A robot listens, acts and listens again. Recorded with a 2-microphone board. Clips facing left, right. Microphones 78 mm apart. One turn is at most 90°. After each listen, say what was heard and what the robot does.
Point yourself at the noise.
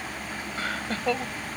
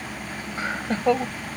The laughter: about 25° right or 155° right. Turn 25° right.
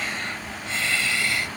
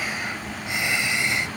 The laughter: about 20° right or 160° right. Turn 20° right.
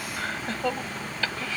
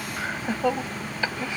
The laughter: about 20° right or 160° right. Turn 20° right.
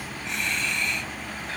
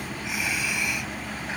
Turn 30° right.
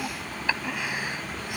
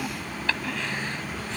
So it is at 10° left. Turn 10° left.
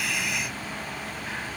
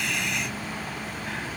Found it: laughter, straight ahead.